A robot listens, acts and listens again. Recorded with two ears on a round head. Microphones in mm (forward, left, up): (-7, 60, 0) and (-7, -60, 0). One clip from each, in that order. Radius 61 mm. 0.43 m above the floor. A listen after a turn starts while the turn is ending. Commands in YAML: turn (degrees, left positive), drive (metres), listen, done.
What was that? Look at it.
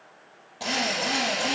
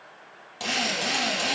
turn: -55
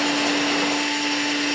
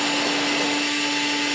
turn: -70
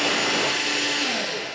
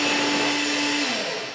done: "Facing the drill, over 4 m away."